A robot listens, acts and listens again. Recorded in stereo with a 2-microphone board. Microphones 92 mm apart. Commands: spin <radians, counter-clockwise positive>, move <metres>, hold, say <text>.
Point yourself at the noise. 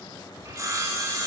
spin -0.61
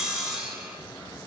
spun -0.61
spin -0.17
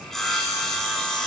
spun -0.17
say Facing the sawing.